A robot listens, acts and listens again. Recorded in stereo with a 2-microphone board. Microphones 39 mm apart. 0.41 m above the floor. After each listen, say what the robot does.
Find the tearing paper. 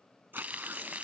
Turn 70° right.
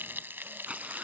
Turn 35° right.
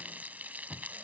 Keep listening.
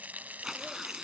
Turn 10° right.
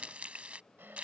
Keep listening.
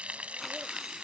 Keep listening.
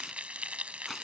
Facing where the tearing paper came from. I can't hear it now.